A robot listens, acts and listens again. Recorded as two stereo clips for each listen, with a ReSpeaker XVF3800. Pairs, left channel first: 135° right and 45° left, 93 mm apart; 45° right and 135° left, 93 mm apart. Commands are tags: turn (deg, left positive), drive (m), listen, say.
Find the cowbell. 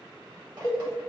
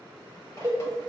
<turn deg="180"/>
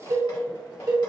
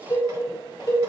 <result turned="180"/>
<say>Found it: a cowbell, straight ahead, 1 to 2 m away.</say>